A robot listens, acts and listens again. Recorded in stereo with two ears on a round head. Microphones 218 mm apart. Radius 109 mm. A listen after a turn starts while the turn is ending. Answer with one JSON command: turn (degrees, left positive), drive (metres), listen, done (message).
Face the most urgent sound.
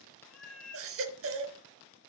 {"turn": -60}
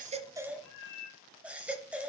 {"done": "Found it: a baby crying, straight ahead."}